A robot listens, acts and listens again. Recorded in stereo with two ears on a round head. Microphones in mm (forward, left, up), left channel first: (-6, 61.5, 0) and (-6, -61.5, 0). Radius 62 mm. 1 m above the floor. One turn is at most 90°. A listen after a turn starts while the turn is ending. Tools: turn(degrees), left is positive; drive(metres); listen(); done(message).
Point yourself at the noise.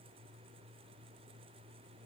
listen()
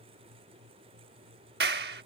turn(degrees=-90)
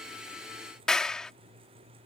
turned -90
done("Found it: a clap, straight ahead.")